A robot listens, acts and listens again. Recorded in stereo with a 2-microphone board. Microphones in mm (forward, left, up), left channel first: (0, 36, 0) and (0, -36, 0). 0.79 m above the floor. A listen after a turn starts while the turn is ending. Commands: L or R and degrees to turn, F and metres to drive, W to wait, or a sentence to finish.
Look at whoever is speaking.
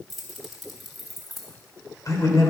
L50
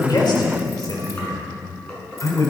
L55
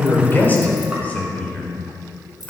L20
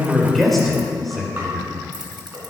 Found it: a man speaking, straight ahead.